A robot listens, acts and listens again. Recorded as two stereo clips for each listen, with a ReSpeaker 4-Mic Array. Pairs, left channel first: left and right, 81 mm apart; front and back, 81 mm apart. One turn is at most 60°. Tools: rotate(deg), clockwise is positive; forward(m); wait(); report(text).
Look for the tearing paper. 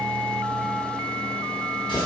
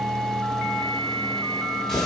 wait()
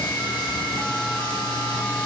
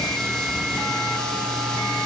wait()
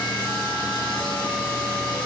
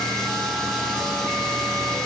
report("I can't make out tearing paper, only a running tap.")